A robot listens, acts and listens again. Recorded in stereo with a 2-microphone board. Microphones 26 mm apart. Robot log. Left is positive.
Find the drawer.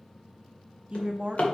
note: The drawer: about 50° left or 130° left.
cmd yaw +50
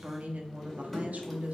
end: Facing the drawer, 1 to 2 m away.